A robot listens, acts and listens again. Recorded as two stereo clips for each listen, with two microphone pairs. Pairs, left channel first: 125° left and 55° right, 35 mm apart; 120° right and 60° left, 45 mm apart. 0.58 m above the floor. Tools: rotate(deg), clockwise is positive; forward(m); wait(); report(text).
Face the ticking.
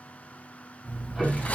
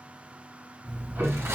rotate(-20)
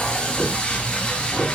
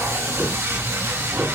rotate(-10)
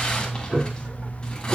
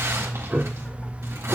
report("Facing the ticking, over 4 m away.")